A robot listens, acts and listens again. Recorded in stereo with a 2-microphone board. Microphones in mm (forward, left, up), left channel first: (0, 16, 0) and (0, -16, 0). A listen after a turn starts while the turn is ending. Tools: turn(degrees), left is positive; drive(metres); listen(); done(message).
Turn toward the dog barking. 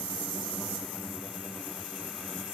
listen()
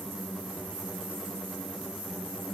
listen()
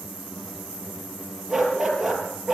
turn(degrees=-30)
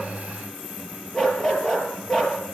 turn(degrees=25)
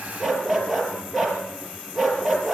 done("Found it: a dog barking, straight ahead, over 4 m away.")